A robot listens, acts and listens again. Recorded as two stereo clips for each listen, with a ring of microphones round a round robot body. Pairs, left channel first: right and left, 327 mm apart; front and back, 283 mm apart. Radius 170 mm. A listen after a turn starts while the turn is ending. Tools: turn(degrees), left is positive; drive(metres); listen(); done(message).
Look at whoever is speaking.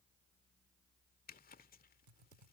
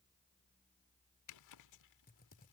listen()
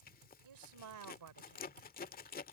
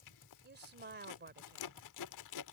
turn(degrees=125)
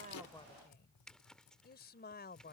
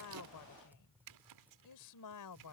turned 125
turn(degrees=-25)
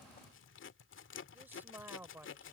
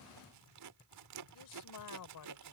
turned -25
done("Found it: a woman speaking, straight ahead.")